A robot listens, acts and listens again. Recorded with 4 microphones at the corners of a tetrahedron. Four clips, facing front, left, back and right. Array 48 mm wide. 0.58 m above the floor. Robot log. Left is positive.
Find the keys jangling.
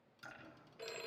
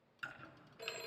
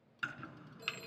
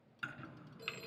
cmd idle
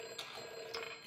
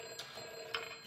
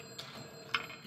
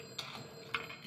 note: The keys jangling: 70° right.
cmd yaw -70
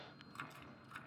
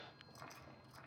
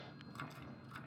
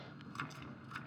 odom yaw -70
cmd idle
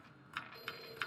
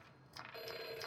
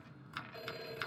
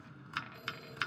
cmd idle
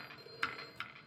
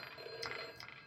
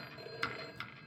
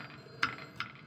end: Facing where the keys jangling came from. I can't hear it now.